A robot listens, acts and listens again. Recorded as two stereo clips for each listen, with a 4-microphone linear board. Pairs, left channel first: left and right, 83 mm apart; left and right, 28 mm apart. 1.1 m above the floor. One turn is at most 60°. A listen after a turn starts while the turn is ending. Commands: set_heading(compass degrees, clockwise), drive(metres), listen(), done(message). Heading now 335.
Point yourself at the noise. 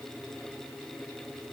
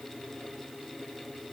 listen()
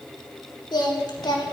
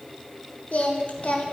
set_heading(275)
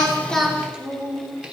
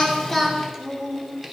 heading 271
set_heading(281)
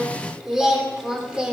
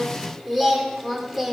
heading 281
set_heading(291)
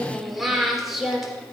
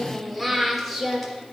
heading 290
done("Facing the singing, 2 to 4 m away.")